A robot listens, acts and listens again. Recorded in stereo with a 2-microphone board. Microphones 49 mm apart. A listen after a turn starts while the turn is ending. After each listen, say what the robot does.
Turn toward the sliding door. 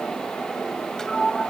Turn 30° left.
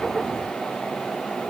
Keep listening.
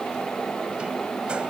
Keep listening.
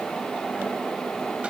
I heard a sliding door, but can't make it out now. It was about 20° right or 140° left.